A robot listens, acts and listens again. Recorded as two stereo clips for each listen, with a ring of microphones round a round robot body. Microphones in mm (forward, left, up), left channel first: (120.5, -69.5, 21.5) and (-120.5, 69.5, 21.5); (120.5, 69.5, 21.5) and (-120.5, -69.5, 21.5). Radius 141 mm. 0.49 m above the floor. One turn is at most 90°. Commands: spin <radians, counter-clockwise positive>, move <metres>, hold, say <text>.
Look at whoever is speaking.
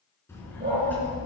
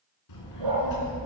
spin 0.96
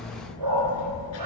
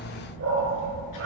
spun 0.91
spin 0.17
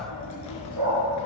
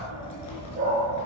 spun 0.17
say Facing the child speaking.